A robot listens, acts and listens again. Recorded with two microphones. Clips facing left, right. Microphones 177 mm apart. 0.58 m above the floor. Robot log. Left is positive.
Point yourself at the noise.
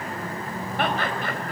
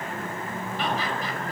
note: The laughter: about 60° left or 120° left.
cmd yaw +60
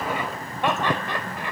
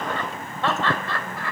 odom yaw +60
note: So it is at 20° left.
cmd yaw +20
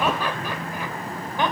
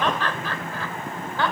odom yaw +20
note: The laughter is now 20° left.
cmd yaw +20
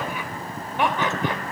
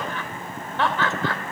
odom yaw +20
note: The laughter is now 15° left.
cmd yaw +15
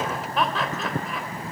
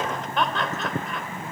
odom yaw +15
end: Facing the laughter.